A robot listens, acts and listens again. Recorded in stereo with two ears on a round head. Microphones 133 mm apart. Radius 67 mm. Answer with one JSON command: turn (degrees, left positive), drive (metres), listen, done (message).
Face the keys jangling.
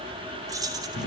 {"turn": -25}
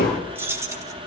{"turn": -20}
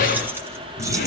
{"listen": true}
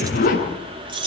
{"turn": -35}
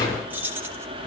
{"turn": -15}
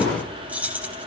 {"turn": -10}
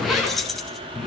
{"done": "Found it: keys jangling, straight ahead, 2 to 4 m away."}